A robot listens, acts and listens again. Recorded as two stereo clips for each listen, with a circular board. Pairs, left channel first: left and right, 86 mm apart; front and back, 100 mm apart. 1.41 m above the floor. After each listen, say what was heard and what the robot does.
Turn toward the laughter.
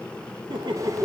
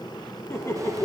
The laughter: 60° right. Turn 60° right.
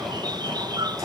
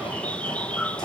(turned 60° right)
Keep listening.
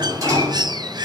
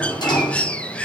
Keep listening.
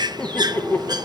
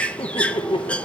The laughter is now 25° left. Turn 25° left.
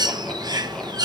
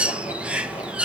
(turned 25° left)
Keep listening.
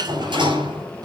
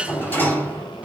Keep listening.
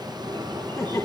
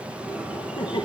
The laughter is now 30° left. Turn 30° left.
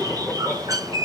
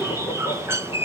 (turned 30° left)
Keep listening.
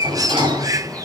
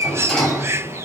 Keep listening.
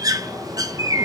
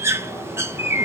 I heard laughter from this way, but can't make it out now.